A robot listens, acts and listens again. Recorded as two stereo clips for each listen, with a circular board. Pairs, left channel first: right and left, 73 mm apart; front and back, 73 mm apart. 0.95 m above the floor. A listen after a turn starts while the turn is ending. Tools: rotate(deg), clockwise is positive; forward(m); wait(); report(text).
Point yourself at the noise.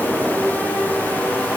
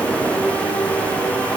wait()
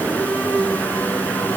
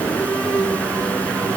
wait()
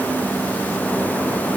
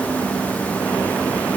report("I can't make out anything.")